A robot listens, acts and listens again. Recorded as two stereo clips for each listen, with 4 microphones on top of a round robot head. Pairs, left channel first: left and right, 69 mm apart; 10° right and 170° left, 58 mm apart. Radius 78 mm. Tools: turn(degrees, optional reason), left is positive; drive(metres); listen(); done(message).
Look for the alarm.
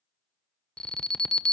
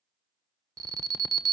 turn(degrees=170, reason="The alarm: 170° left.")
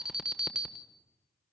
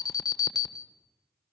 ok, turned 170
turn(degrees=-10, reason="The alarm is now 10° right.")
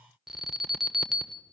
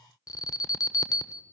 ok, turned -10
done("Facing the alarm, 1 to 2 m away.")